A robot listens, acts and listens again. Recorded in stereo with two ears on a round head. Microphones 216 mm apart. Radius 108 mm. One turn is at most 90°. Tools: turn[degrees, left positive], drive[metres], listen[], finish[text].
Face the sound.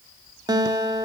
Thought: The guitar: about 15° right or 165° right.
Action: turn[-15]
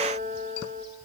Thought: So it is at 150° right.
Action: turn[-90]
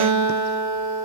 Thought: The guitar is now 100° right.
Action: turn[-90]
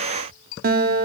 Thought: The guitar is now 35° right.
Action: turn[-35]
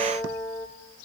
Action: finish[Facing the guitar, under 1 m away.]